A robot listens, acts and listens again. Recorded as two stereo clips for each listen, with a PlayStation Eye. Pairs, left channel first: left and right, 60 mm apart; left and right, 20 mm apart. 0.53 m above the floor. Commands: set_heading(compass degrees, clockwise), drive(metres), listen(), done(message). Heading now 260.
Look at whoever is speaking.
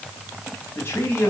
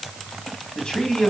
set_heading(220)
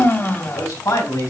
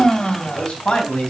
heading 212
set_heading(117)
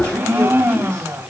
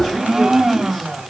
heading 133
set_heading(118)
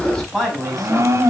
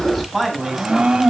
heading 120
done("Facing the man speaking.")